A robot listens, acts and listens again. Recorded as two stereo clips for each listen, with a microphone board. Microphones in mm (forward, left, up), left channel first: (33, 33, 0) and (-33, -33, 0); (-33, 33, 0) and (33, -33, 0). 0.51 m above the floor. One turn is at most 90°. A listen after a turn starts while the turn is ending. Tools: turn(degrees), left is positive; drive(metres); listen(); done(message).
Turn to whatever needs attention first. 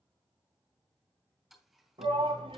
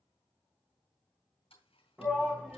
turn(degrees=-90)
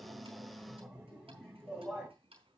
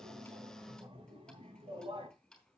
turn(degrees=-45)
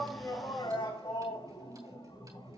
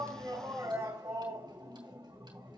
turn(degrees=15)
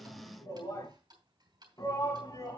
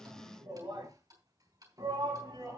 done("Facing the shout, over 4 m away.")